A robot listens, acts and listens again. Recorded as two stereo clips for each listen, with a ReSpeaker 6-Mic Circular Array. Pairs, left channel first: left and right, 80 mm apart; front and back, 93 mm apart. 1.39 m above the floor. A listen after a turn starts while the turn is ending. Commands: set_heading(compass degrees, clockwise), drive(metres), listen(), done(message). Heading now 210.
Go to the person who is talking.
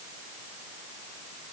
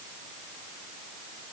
listen()
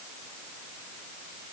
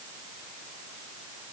listen()
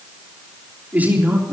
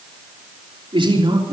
set_heading(10)
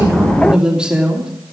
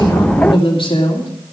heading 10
set_heading(20)
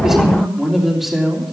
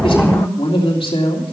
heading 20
drive(1.0)
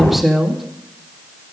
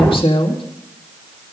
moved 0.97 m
drive(1.0)
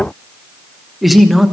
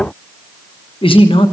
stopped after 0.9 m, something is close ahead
done("I am next to the man speaking.")